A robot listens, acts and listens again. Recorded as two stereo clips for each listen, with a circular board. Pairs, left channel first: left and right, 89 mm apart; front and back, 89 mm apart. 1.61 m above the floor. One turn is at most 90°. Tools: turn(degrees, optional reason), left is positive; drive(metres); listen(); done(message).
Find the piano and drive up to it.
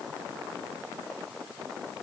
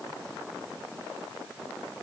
listen()
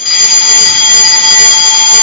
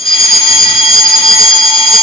listen()
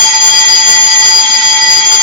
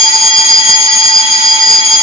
done("I can't make out a piano, only a fire alarm.")